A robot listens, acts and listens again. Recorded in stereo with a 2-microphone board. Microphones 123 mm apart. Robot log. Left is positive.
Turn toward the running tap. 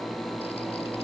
cmd idle
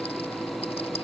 cmd idle
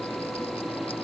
end: I can't make out a running tap to turn to.